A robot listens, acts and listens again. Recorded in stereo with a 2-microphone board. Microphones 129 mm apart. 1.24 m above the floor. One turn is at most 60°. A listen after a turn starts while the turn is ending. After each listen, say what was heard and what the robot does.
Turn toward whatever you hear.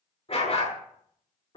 The dog barking: about 45° left or 135° left. Turn 45° left.
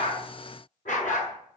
So it is at 85° left. Turn 60° left.
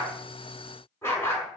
The dog barking is now 20° left. Turn 20° left.
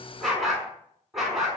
Facing the dog barking, over 4 m away.